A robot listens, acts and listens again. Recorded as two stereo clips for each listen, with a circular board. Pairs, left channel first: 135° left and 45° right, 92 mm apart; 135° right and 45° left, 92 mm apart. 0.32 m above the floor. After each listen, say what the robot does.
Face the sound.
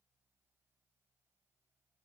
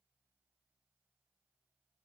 Keep listening.
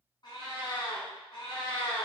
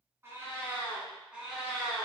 Turn 135° left.
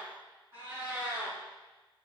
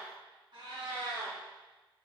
Turn 25° left.
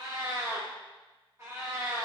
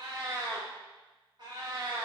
Turn 10° left.
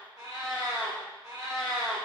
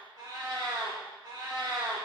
Found it: a cat meowing, straight ahead.